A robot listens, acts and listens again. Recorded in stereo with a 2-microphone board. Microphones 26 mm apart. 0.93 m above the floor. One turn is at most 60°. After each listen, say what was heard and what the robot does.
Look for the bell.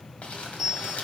The bell: about 20° right or 160° right. Turn 20° right.
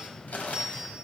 So it is at 140° right. Turn 60° right.
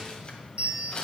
The bell is now 75° right. Turn 60° right.
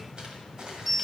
Found it: a bell, straight ahead.